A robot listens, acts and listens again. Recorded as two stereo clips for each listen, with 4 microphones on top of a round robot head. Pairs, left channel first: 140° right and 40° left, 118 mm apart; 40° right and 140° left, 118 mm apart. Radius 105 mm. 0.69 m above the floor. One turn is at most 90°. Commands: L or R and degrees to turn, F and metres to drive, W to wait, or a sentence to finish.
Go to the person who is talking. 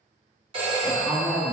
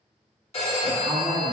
L90
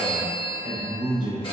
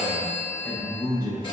L30
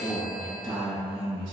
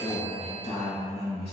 F1.0
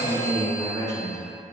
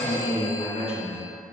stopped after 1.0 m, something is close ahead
R15
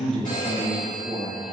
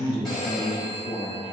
I am next to the man speaking.